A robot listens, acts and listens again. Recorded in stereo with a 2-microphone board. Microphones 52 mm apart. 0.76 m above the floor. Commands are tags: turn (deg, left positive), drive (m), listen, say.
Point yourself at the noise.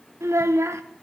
<turn deg="-65"/>
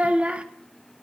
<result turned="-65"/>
<turn deg="-30"/>
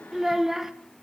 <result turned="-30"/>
<turn deg="-10"/>
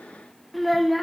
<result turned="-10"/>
<say>Facing the child speaking, under 1 m away.</say>